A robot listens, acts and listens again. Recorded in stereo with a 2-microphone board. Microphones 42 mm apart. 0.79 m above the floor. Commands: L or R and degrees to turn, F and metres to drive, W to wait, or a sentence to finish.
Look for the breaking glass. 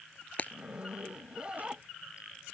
L40
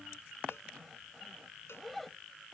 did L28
W
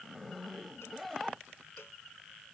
I heard breaking glass, but can't make it out now. It was about 10° left or 110° left.